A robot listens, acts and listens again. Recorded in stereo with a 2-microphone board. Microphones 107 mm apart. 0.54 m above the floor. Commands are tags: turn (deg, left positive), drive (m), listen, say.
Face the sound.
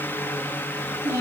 <turn deg="-25"/>
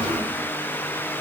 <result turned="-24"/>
<listen/>
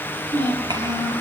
<turn deg="-40"/>
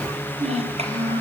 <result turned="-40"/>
<turn deg="-105"/>
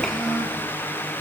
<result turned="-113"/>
<say>Found it: a child speaking, straight ahead.</say>